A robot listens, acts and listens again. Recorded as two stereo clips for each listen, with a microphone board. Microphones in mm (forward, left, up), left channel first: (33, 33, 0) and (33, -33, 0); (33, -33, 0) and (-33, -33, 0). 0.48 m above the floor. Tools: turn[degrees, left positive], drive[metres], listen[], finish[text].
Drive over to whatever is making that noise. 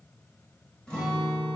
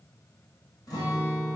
Thought: The guitar: 15° left.
Action: turn[15]
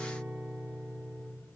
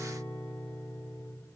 Action: drive[1.0]
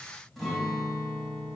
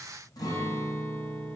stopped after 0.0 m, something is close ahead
Action: finish[Something is in my way. I am facing the guitar but have not reached it.]